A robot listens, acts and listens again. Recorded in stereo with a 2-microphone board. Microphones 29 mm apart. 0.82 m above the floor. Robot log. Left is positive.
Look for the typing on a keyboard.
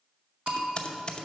note: The typing on a keyboard: about 35° left or 145° left.
cmd yaw +35
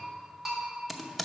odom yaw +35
end: Facing the typing on a keyboard, under 1 m away.